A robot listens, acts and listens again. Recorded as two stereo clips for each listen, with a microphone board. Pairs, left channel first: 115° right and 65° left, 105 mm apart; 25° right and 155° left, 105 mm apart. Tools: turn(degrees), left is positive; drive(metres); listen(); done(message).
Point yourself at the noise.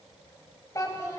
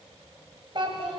turn(degrees=-175)
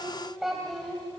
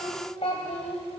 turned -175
turn(degrees=-25)
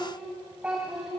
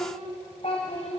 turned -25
turn(degrees=-15)
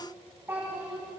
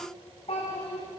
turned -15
done("Facing the child speaking.")